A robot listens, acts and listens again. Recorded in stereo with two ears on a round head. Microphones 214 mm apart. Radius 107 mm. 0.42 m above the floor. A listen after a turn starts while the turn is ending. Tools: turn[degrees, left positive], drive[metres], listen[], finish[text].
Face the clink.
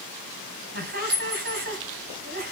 Thought: The clink: about 45° right or 135° right.
Action: turn[-45]
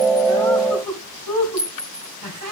Action: finish[Found it: a clink, straight ahead.]